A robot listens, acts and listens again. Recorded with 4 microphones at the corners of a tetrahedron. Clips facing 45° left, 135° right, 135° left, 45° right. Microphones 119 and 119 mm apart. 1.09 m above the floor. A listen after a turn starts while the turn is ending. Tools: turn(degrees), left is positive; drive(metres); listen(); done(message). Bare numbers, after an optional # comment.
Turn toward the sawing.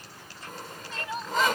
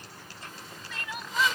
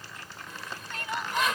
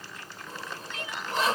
# The sawing: 10° left.
turn(10)
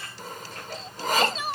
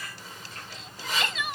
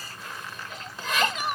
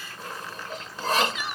done("Found it: sawing, straight ahead.")